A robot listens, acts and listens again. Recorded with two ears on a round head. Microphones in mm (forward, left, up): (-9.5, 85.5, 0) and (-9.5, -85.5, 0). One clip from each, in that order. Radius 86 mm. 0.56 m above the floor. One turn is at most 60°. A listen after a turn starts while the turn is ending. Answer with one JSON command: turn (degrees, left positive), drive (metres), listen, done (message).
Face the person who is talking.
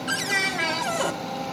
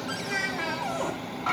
{"turn": 30}
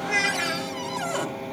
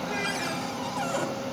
{"listen": true}
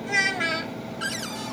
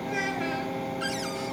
{"turn": 60}
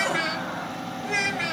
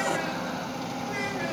{"turn": 55}
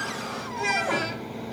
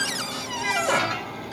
{"done": "Found it: a child speaking, straight ahead, 1 to 2 m away."}